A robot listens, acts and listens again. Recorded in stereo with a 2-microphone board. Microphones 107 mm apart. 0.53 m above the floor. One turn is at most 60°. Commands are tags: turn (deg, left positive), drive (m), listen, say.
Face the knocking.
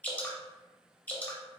<listen/>
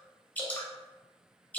<listen/>
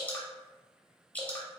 <say>I can't make out knocking to turn to.</say>